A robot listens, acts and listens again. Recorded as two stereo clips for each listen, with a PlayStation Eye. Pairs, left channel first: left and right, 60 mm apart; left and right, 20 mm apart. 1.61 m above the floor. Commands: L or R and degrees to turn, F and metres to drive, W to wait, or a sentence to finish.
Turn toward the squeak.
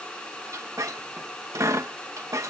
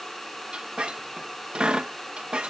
R65
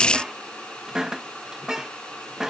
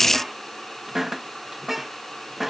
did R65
R10
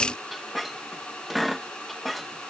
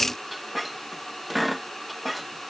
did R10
Facing the squeak.